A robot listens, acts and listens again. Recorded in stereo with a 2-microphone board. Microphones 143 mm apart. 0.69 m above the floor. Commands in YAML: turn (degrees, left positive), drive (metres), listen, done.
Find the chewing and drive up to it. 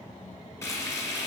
listen: true
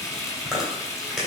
turn: -30
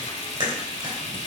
turn: -145
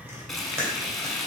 turn: -15
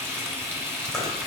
drive: 1.0
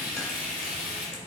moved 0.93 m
listen: true
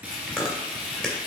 drive: 1.0
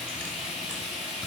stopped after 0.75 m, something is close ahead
listen: true
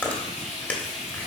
turn: 10
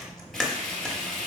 done: "Arrived at the chewing, straight ahead."